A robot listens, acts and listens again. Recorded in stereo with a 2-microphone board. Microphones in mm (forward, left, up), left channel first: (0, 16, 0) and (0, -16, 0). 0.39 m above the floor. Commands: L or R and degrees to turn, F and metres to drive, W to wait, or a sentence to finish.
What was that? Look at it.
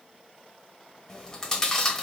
L20
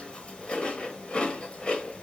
L140
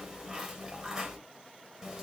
R20
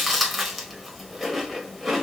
Found it: chewing, straight ahead, 1 to 2 m away.